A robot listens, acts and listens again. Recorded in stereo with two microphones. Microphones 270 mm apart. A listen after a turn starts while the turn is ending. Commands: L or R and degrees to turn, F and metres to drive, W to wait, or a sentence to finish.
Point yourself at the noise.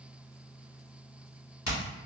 L90
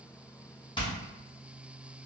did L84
L20
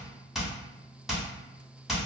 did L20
Found it: hammering, straight ahead, 1 to 2 m away.